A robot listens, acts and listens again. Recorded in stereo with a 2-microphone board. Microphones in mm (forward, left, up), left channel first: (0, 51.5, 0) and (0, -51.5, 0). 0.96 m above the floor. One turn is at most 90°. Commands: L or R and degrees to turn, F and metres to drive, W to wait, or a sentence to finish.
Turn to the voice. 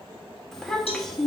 L30
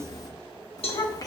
L90
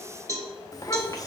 L35
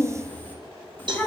L20
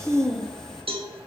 Facing the child speaking.